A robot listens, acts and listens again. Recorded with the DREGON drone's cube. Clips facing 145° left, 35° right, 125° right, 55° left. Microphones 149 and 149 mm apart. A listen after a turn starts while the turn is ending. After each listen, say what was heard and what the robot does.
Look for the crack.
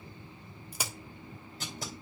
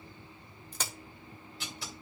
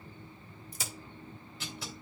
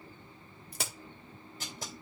The crack: 65° left. Turn 65° left.
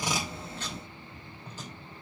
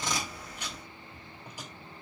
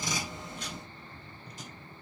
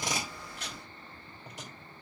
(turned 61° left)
I heard a crack from this way, but can't make it out now.